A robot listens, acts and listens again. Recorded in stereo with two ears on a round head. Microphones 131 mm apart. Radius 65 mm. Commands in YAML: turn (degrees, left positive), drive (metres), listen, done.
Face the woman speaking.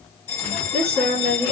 turn: -45
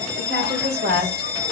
turn: -95
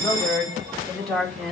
done: "Facing the woman speaking."